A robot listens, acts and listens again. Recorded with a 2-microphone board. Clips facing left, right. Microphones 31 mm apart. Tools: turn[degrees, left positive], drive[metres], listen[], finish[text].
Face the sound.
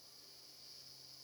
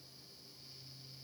Action: listen[]
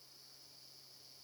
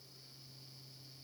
Action: listen[]
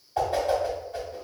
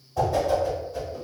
Thought: The whoosh: about 50° left or 130° left.
Action: turn[50]
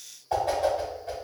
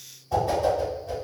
Thought: So it is at 70° left.
Action: turn[70]
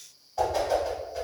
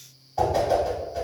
Action: finish[Facing the whoosh.]